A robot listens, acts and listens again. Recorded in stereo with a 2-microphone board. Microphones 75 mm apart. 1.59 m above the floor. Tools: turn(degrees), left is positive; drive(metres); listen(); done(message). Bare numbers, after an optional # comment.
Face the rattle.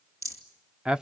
# The rattle: about 45° right or 135° right.
turn(-45)
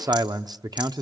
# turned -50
listen()
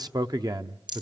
# So it is at 85° right.
turn(-85)
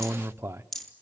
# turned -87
done("Found it: a rattle, straight ahead, 2 to 4 m away.")